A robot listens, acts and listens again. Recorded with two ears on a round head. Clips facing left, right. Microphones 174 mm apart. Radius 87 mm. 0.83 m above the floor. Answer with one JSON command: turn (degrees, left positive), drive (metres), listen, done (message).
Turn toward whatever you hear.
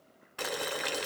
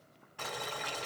{"turn": 70}
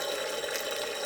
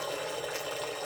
{"turn": 25}
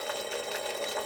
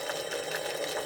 {"turn": -10}
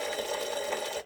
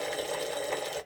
{"done": "Found it: boiling, straight ahead, under 1 m away."}